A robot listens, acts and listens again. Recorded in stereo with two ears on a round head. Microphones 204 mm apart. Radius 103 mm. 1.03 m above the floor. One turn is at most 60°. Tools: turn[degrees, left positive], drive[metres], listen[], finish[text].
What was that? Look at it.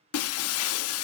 Thought: The breaking glass: about 70° left or 110° left.
Action: turn[60]
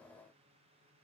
Action: listen[]
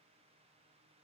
Action: finish[I heard breaking glass, but can't make it out now. It was about 10° left or 50° left.]